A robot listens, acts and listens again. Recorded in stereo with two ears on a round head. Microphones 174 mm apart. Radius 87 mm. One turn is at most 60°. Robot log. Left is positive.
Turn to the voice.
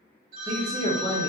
note: The man speaking: about 20° right or 160° right.
cmd yaw -20
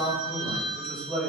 end: Facing the man speaking, under 1 m away.